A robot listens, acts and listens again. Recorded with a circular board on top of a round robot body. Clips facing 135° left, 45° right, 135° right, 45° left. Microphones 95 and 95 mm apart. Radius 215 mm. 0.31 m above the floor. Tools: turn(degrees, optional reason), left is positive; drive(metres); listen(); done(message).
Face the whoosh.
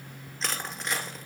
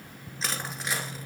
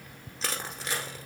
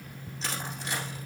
listen()
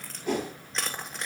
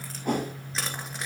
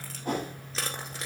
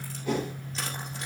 turn(degrees=-90, reason="The whoosh: 90° right.")
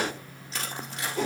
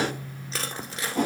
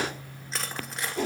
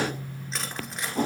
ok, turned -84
done("Found it: a whoosh, straight ahead.")